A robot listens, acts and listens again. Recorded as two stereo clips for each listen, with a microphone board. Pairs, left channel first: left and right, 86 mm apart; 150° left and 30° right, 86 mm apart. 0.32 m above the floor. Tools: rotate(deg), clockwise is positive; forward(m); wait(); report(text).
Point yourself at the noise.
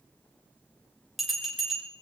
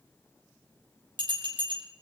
report("Found it: a bell, straight ahead, over 4 m away.")